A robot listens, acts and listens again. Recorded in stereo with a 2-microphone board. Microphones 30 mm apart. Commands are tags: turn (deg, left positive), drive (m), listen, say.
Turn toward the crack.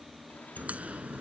<turn deg="-55"/>
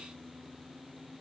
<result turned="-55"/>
<listen/>
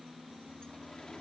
<say>I heard a crack, but can't make it out now. It was about straight ahead or 70° right.</say>